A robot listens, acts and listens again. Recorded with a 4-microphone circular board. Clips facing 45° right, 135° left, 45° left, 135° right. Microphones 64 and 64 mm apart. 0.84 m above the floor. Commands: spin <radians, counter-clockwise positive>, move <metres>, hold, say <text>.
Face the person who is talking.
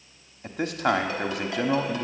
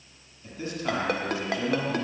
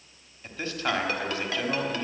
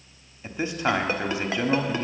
spin -1.13
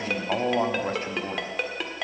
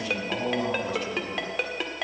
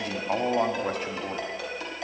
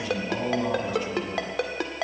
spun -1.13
say Facing the man speaking, 1 to 2 m away.